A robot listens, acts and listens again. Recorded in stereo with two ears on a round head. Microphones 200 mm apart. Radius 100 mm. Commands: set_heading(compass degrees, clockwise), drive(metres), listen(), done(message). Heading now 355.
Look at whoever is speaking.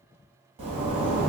listen()
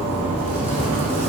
listen()
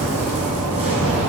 done("I can't make out anyone speaking, only a zipper.")